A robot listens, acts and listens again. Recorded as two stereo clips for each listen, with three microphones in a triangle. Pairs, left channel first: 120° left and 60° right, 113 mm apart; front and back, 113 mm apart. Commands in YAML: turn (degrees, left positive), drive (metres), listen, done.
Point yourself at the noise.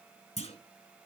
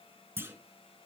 turn: 110
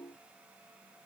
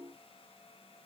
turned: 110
done: "I heard a clunk from this way, but can't make it out now."